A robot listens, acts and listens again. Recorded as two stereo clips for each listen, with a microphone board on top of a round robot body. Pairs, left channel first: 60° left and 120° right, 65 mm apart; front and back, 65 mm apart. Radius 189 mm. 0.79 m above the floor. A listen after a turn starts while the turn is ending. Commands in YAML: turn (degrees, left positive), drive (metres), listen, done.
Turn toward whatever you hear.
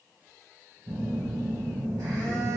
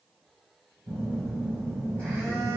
turn: -70
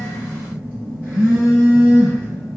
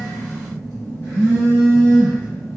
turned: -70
done: "Found it: a phone buzzing, straight ahead, 1 to 2 m away."